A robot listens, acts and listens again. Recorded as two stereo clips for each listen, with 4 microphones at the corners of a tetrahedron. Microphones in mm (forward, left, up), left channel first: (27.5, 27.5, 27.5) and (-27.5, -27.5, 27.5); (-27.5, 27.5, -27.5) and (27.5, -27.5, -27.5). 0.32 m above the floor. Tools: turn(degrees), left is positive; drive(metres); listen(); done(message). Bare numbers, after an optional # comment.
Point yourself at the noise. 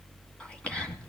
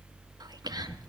# The whispering: 30° right.
turn(-30)
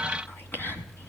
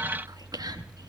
# The whispering is now 20° right.
turn(-20)
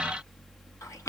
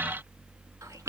done("Found it: whispering, straight ahead.")